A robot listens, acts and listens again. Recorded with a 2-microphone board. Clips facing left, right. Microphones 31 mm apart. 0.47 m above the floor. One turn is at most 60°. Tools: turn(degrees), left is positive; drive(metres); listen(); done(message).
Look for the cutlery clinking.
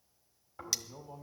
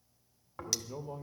turn(degrees=30)
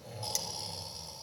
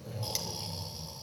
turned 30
listen()
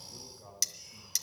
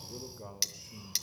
turn(degrees=-25)
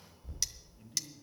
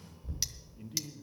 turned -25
listen()
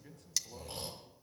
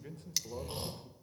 turn(degrees=-15)
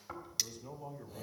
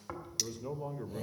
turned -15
done("Found it: cutlery clinking, straight ahead, under 1 m away.")